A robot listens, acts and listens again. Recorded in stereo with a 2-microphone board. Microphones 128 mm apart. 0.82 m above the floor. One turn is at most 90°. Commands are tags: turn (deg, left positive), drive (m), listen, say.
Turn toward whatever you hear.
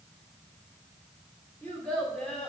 <turn deg="30"/>
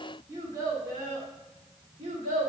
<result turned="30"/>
<turn deg="-50"/>
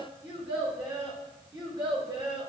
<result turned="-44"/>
<turn deg="-30"/>
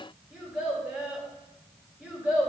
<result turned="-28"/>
<say>Found it: a child speaking, straight ahead, 2 to 4 m away.</say>